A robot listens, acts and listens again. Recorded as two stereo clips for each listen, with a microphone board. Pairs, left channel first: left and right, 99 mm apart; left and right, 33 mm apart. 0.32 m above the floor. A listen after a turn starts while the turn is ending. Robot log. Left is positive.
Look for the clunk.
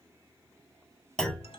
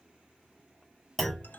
cmd yaw +30
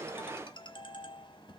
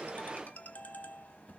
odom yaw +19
cmd idle
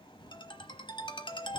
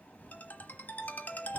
end: I heard a clunk, but can't make it out now. It was about 15° right or 155° left.